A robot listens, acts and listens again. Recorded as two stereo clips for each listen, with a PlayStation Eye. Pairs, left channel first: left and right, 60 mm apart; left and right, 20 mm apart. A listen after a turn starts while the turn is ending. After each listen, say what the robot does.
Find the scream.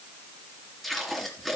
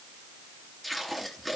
Keep listening.
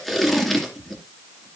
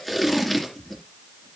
Keep listening.
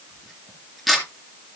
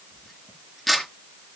I can't make out a scream to turn to.